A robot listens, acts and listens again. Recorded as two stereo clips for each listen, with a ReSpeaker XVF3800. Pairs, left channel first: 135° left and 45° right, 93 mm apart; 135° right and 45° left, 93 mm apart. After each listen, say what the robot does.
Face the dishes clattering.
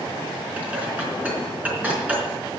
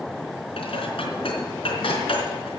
Turn 120° right.
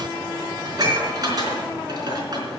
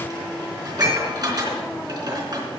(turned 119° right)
Facing the dishes clattering, over 4 m away.